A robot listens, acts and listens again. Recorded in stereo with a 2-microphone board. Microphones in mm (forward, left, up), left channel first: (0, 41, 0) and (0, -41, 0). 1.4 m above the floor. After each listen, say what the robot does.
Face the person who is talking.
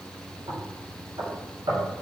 Keep listening.
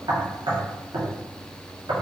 Keep listening.
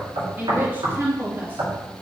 Turn 25° right.
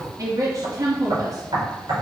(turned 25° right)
Turn 130° right.
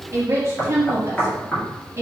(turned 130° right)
Turn 35° right.
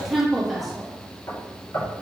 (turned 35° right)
Facing the woman speaking.